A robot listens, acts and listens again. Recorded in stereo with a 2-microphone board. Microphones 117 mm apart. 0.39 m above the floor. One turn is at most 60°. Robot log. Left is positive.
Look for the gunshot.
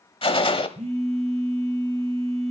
note: The gunshot: about 55° left or 125° left.
cmd yaw +55
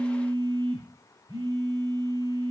cmd idle
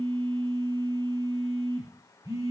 end: I heard a gunshot, but can't make it out now. It was about straight ahead or 70° left.